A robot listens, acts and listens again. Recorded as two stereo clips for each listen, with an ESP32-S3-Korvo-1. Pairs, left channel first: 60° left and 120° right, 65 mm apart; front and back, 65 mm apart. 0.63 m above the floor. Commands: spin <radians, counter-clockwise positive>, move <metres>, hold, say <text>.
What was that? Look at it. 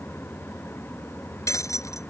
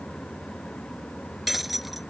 spin 1.66
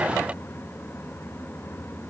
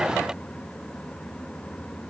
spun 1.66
say Facing where the breaking glass came from. I can't hear it now.